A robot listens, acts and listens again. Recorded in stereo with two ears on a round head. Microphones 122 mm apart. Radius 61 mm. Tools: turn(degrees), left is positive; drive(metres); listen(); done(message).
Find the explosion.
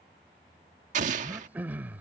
turn(degrees=-65)
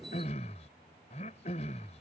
listen()
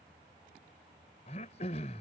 done("I heard an explosion, but can't make it out now. It was about straight ahead or 50° right.")